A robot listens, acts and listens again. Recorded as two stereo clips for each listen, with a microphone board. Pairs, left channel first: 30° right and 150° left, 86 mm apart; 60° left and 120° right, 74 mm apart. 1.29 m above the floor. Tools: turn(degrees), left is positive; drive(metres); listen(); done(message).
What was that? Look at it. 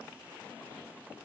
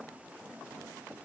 listen()
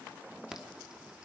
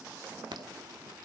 turn(degrees=-125)
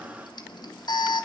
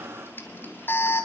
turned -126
done("Found it: an alarm, straight ahead, 2 to 4 m away.")